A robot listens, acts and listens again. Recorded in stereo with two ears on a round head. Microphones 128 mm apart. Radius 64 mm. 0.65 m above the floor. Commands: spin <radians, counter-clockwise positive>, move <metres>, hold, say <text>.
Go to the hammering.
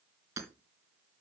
spin -0.35
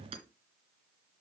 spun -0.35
spin -2.44
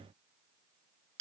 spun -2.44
spin -0.79
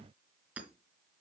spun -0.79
spin -0.17
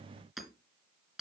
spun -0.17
move 1.0
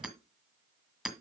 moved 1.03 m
move 1.0
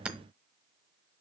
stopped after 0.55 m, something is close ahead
spin -0.17
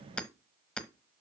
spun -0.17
say Arrived at the hammering, straight ahead.